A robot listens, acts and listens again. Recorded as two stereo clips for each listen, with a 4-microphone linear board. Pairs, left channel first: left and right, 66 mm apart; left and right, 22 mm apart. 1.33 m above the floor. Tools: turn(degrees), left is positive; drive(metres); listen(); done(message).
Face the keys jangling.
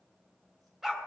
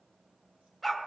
listen()
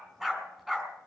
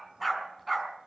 listen()
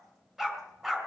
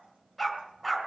done("I can't make out keys jangling to turn to.")